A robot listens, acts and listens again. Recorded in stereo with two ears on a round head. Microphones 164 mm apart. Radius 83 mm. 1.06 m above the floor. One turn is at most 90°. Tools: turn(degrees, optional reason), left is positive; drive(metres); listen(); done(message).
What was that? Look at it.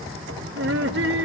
turn(degrees=-65, reason="The laughter: about 65° right or 115° right.")
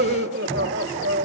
turn(degrees=-65, reason="So it is at 65° right.")
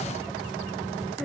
listen()
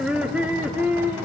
turn(degrees=-10, reason="The laughter is now 10° right.")
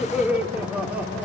done("Found it: laughter, straight ahead, 2 to 4 m away.")